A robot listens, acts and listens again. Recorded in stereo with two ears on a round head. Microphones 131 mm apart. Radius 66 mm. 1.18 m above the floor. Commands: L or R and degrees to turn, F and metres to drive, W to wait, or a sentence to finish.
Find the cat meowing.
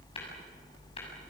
W
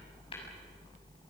W
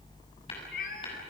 L60
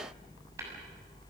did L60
W
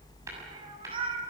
R35
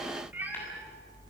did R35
R10
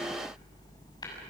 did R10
W
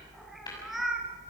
Found it: a cat meowing, straight ahead.